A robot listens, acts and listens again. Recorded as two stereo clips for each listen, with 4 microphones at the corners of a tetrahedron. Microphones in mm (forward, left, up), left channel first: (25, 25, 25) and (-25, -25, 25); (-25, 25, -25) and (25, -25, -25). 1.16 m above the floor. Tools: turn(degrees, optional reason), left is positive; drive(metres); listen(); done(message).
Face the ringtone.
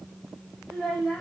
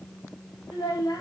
listen()
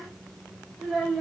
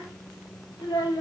listen()
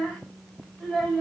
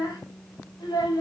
done("I can't make out a ringtone to turn to.")